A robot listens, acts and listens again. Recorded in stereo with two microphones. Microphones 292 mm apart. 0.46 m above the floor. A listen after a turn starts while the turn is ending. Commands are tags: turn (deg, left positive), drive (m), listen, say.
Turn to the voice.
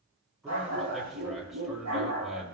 <turn deg="30"/>
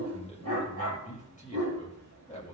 <turn deg="150"/>
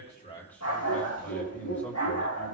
<say>Facing the man speaking.</say>